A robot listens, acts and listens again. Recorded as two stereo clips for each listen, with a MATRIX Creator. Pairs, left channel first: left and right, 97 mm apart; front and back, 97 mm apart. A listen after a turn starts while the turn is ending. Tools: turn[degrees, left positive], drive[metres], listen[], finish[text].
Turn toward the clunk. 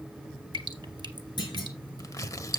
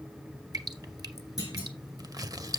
Thought: The clunk: 50° left.
Action: turn[50]
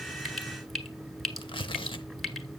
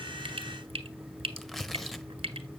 Action: finish[I heard a clunk from this way, but can't make it out now.]